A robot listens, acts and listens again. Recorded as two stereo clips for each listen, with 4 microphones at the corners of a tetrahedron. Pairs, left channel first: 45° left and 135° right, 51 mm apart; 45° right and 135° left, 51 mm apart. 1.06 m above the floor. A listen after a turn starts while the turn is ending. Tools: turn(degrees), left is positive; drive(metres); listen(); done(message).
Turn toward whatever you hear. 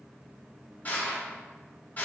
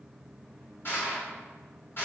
done("Found it: crushing, straight ahead, 1 to 2 m away.")